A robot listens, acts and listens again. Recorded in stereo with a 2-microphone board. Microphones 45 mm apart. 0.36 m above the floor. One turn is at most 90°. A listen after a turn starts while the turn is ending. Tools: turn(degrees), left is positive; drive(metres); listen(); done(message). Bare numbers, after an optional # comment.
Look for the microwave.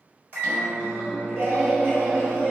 # The microwave: about 35° right or 145° right.
turn(-35)
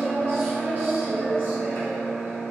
done("Found it: a microwave, straight ahead.")